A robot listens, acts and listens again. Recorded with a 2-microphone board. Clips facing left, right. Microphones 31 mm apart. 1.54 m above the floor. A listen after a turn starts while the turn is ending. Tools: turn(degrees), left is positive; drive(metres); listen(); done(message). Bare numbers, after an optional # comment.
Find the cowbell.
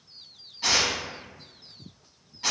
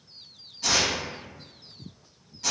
listen()
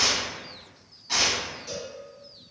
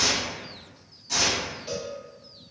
# The cowbell: about 45° right or 135° right.
turn(-45)
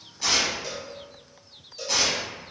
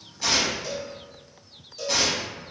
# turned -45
done("Facing the cowbell, 1 to 2 m away.")